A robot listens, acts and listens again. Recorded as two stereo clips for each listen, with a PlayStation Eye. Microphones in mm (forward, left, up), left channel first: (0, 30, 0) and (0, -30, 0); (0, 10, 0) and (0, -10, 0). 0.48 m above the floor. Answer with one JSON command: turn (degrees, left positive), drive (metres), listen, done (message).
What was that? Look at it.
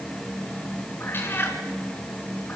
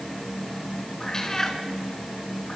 {"turn": 35}
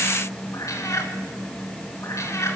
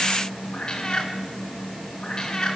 {"turn": 130}
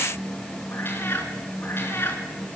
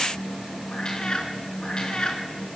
{"turn": 40}
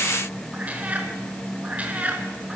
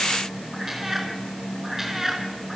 {"turn": -25}
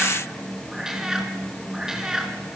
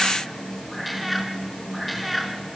{"turn": -10}
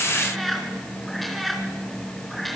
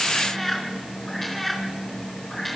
{"done": "Found it: a cat meowing, straight ahead."}